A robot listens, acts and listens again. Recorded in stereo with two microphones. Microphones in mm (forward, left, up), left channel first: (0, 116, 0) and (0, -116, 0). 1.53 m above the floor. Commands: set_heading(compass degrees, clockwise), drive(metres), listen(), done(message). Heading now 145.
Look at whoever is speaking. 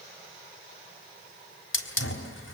listen()
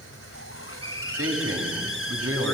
set_heading(235)
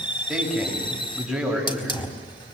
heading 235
done("Found it: a man speaking, straight ahead.")